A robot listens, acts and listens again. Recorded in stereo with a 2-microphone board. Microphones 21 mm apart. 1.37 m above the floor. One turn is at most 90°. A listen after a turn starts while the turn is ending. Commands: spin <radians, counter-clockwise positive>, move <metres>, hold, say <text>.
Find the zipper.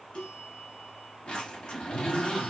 spin 0.70
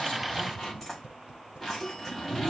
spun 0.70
say Found it: a zipper, straight ahead.